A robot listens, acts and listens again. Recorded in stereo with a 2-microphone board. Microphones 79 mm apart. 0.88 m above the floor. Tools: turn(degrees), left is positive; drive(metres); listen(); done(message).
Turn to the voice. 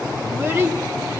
turn(degrees=-30)
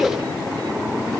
done("Found it: a child speaking, straight ahead, 1 to 2 m away.")